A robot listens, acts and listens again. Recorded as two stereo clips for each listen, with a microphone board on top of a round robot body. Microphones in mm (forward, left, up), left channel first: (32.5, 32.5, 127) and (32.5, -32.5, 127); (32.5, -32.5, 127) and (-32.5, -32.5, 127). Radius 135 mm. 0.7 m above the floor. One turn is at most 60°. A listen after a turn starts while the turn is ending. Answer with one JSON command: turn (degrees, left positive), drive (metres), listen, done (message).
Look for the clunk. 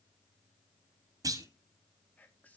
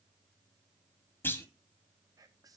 {"turn": -55}
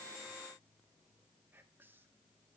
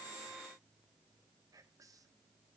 {"done": "Facing where the clunk came from. I can't hear it now."}